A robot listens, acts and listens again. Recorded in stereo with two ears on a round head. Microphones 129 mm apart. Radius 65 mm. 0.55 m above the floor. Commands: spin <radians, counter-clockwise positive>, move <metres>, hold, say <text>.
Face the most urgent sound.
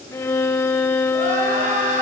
spin -0.96
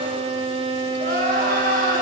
spin -1.22
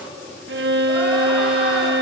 hold
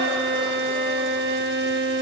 hold
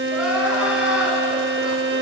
spin -0.17
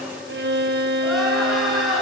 say Facing the crying.